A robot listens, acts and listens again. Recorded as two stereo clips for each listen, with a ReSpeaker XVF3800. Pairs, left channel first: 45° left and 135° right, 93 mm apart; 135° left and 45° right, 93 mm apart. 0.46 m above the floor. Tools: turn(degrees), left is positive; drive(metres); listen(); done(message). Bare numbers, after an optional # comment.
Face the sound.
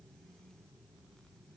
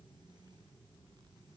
listen()
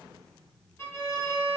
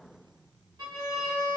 # The violin: 10° right.
turn(-10)
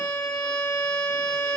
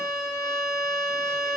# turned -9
done("Facing the violin, under 1 m away.")